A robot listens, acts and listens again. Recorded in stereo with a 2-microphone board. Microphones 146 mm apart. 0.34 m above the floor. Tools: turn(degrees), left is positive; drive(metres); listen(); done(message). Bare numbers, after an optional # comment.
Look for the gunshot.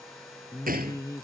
turn(-90)
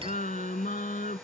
done("Facing where the gunshot came from. I can't hear it now.")